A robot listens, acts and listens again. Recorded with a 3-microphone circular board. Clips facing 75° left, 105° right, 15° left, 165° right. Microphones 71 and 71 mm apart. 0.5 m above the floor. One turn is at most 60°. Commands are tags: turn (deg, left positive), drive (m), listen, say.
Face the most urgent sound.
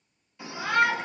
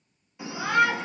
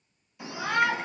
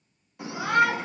<turn deg="-60"/>
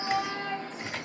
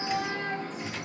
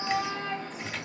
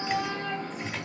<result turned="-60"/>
<turn deg="-60"/>
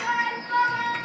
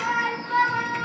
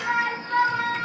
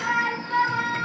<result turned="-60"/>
<turn deg="-60"/>
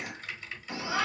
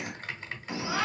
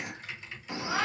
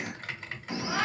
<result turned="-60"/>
<turn deg="-25"/>
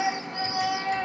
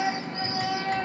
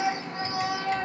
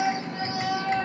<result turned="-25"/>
<turn deg="10"/>
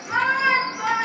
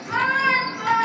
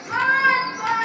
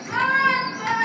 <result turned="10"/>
<say>Found it: a shout, straight ahead.</say>